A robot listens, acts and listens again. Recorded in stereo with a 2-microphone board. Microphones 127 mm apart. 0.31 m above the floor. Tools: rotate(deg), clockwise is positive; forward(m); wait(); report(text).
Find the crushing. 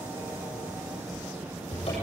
wait()
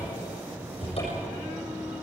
wait()
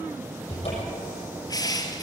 rotate(-30)
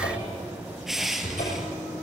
report("Facing the crushing.")